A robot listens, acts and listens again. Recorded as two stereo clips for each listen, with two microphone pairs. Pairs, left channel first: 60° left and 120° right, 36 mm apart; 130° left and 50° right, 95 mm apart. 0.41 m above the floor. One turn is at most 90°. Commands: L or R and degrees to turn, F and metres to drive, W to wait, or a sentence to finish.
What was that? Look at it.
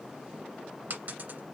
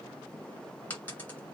R90
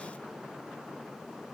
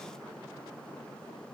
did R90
R65
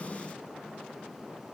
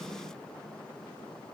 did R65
Facing where the dropped coin came from. I can't hear it now.